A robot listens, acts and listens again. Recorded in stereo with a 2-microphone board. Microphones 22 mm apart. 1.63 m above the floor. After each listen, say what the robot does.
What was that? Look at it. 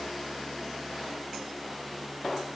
Keep listening.
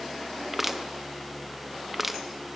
Turn 30° right.
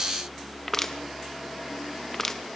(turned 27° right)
Turn 10° left.
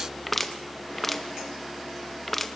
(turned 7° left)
Found it: crushing, straight ahead, 1 to 2 m away.